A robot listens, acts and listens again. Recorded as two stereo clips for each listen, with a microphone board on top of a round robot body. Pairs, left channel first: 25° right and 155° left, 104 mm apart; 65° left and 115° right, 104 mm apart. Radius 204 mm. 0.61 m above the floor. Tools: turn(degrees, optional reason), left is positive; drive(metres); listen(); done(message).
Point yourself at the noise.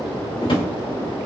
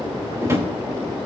turn(degrees=-50, reason="The drawer: 50° right.")
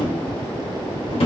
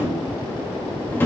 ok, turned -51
done("Found it: a drawer, straight ahead, 2 to 4 m away.")